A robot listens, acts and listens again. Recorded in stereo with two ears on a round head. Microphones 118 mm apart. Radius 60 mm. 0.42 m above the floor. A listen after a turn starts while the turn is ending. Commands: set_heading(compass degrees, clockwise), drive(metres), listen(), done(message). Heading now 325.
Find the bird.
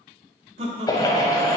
set_heading(295)
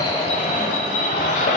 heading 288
set_heading(178)
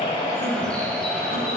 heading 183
done("Found it: a bird, straight ahead.")